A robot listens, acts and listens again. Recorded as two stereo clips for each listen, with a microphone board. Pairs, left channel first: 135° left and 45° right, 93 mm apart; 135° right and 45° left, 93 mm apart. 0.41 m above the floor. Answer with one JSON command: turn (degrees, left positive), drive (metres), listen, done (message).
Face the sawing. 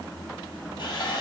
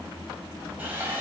{"turn": 115}
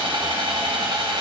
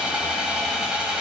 {"turn": -35}
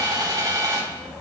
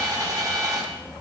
{"done": "Facing the sawing, 1 to 2 m away."}